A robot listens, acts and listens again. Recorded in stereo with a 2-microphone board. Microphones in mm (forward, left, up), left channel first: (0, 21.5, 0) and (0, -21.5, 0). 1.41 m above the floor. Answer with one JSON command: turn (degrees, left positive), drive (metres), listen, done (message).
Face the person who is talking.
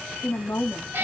{"turn": 65}
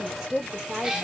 {"turn": -10}
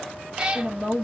{"turn": -15}
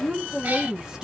{"turn": -15}
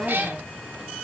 {"done": "Facing the woman speaking, 1 to 2 m away."}